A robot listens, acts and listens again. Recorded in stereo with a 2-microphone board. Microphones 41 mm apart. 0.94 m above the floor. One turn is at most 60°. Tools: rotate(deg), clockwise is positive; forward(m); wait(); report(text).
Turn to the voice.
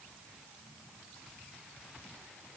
wait()
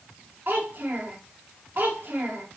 rotate(50)
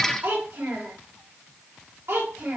rotate(60)
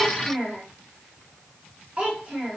rotate(25)
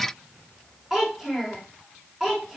rotate(10)
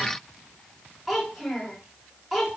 report("Found it: a child speaking, straight ahead, 2 to 4 m away.")